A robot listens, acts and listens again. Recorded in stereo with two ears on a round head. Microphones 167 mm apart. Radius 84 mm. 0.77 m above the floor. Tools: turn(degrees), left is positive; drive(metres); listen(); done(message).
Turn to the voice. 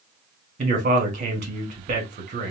turn(degrees=-45)
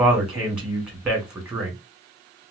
done("Facing the man speaking, 1 to 2 m away.")